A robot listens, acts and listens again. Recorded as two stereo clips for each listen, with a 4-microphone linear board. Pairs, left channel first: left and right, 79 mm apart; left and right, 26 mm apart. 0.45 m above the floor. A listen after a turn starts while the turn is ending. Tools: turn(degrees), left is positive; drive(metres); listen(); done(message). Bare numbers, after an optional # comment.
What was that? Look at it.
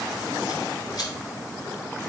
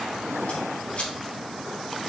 # The scissors: about 65° left or 115° left.
turn(65)
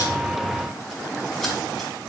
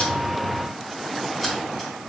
listen()
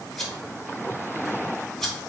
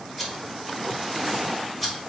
done("Found it: scissors, straight ahead, 2 to 4 m away.")